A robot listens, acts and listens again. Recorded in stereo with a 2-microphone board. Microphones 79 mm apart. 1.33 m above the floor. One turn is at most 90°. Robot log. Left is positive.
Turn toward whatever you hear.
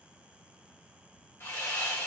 note: The sawing: about 30° left or 150° left.
cmd yaw +30
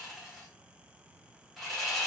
end: Facing the sawing, 1 to 2 m away.